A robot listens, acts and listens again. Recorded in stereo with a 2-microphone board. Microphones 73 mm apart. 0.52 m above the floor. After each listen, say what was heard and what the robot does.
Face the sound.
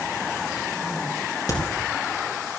The crack: about 55° left or 125° left. Turn 55° left.
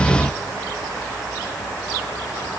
Keep listening.
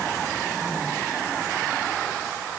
I heard a crack, but can't make it out now. It was about straight ahead or 70° left.